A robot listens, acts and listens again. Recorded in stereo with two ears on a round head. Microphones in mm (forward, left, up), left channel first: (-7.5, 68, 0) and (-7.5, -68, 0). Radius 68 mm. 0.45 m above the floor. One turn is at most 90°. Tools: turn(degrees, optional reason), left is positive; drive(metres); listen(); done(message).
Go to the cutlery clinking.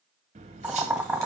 turn(degrees=-45, reason="The cutlery clinking: about 45° right or 135° right.")
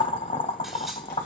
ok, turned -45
drive(metres=1.0)
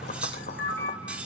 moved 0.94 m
turn(degrees=-10, reason="The cutlery clinking is now 10° right.")
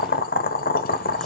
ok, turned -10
listen()
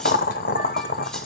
listen()
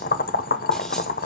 done("I heard cutlery clinking from this way, but can't make it out now. I did not reach it.")